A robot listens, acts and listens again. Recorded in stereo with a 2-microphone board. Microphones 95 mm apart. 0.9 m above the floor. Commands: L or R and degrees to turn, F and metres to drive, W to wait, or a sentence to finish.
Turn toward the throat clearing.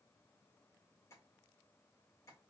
W
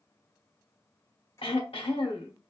L90
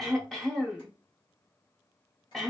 Found it: throat clearing, straight ahead.